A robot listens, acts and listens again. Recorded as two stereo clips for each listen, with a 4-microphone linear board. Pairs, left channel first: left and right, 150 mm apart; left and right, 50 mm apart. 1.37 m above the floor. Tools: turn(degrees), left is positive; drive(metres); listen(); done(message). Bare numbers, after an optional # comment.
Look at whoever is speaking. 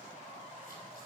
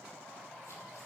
listen()
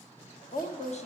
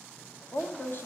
# The woman speaking: about 50° left or 130° left.
turn(50)
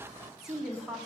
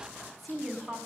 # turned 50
done("Facing the woman speaking.")